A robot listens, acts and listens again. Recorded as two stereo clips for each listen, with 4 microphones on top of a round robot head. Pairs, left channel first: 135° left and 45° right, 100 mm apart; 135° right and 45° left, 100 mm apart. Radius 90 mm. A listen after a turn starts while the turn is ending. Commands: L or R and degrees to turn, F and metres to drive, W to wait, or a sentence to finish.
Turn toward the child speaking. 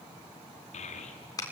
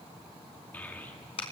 L150
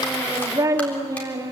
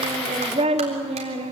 L15
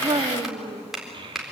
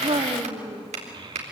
Found it: a child speaking, straight ahead.